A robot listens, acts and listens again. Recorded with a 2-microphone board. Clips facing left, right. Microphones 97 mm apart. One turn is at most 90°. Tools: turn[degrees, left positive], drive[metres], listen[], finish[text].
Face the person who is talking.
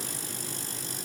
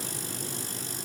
Action: listen[]
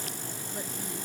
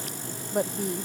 Thought: The woman speaking: about 65° right or 115° right.
Action: turn[-65]
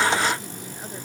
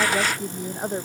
Thought: So it is at 55° right.
Action: turn[-55]
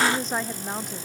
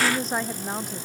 Action: finish[Found it: a woman speaking, straight ahead.]